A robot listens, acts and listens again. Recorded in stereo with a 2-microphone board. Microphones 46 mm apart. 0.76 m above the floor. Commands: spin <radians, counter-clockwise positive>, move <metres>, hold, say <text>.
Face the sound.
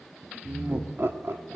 spin -1.05
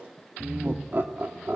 spin -0.87
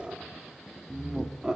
spin -0.35
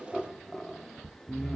say Found it: laughter, straight ahead.